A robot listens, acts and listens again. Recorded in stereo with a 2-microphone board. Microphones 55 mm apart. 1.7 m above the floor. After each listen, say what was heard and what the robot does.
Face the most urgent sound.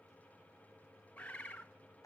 Keep listening.
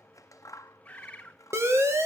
The siren: about 55° right or 125° right. Turn 55° right.
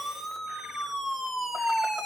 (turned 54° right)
Found it: a siren, straight ahead.